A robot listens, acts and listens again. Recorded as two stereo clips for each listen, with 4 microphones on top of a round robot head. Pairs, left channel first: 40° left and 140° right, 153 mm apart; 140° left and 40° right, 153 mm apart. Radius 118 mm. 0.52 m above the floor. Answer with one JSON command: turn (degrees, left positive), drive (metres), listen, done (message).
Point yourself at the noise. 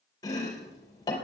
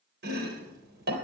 {"turn": -25}
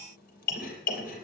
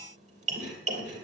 {"done": "Found it: chopping, straight ahead."}